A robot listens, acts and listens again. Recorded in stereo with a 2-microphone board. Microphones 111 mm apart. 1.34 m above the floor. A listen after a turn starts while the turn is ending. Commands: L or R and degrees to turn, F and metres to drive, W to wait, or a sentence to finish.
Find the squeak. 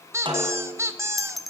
R25
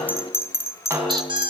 R130
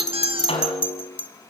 W
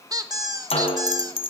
R40
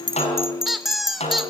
Facing the squeak.